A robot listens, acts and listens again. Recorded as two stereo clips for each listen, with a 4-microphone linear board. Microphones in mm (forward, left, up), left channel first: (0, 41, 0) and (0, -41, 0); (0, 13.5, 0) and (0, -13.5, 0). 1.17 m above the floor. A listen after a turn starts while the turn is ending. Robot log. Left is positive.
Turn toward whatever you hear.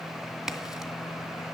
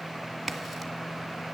cmd yaw -30
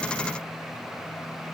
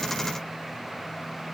cmd idle
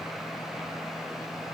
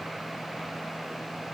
end: I heard a crack, but can't make it out now. It was about 25° left or 145° right.